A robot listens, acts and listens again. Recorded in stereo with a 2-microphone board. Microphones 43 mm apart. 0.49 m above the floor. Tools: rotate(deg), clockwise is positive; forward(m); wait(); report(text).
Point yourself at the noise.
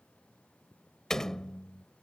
rotate(-30)
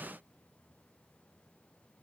wait()
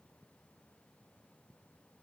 report("I heard a door slam, but can't make it out now. It was about 15° right or 135° left.")